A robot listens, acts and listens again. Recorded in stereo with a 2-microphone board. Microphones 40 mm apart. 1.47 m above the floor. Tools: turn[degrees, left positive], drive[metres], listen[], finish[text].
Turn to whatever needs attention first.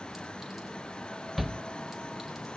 Action: turn[30]
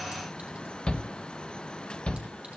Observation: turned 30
Thought: So it is at 150° left.
Action: turn[150]
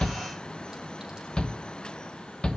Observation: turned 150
Thought: The shout is now 20° left.
Action: turn[20]
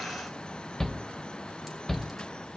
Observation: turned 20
Action: finish[Found it: a shout, straight ahead.]